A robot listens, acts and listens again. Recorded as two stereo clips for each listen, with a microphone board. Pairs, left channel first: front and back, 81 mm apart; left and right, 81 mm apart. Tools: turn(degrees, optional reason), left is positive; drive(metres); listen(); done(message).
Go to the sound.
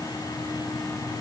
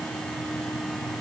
listen()
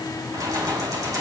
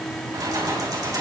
turn(degrees=-135, reason="The keys jangling: 135° right.")
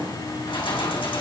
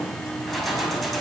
drive(metres=1.0)
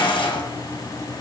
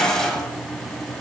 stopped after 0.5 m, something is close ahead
done("Blocked. The keys jangling is further on, straight ahead.")